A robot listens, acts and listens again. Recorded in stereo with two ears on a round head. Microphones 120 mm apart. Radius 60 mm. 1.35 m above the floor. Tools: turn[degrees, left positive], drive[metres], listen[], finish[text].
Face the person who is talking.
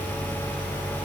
Action: listen[]
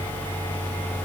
Action: listen[]
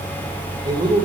Thought: The man speaking: about 35° right or 145° right.
Action: turn[-35]
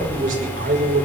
Thought: So it is at 110° right.
Action: turn[-110]
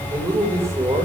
Thought: The man speaking is now 20° right.
Action: turn[-20]
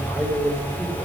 Action: listen[]
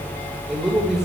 Action: finish[Found it: a man speaking, straight ahead.]